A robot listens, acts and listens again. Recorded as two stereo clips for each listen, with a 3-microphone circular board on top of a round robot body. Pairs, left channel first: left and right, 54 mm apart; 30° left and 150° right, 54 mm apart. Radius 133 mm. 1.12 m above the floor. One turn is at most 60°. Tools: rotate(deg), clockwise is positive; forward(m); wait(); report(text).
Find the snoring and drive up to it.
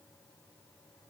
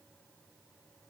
wait()
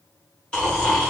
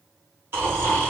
rotate(-60)
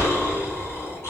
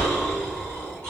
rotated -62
rotate(-60)
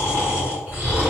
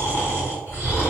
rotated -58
rotate(-45)
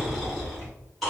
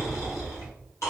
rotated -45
forward(1.0)
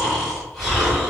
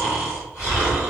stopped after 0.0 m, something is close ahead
report("Something is in my way. I am facing the snoring but have not reached it.")